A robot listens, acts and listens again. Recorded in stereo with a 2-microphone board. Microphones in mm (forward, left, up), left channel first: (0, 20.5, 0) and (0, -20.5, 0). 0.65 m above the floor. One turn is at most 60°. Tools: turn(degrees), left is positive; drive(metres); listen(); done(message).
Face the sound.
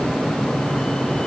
listen()
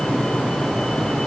listen()
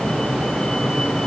done("I can't make out anything to turn to.")